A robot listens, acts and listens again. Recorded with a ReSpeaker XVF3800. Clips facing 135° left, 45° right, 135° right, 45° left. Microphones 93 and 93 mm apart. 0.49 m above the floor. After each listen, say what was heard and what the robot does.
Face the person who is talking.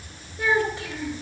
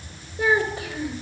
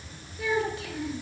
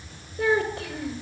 The child speaking: 30° left. Turn 30° left.
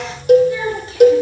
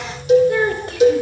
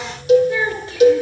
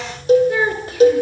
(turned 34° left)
Found it: a child speaking, straight ahead, over 4 m away.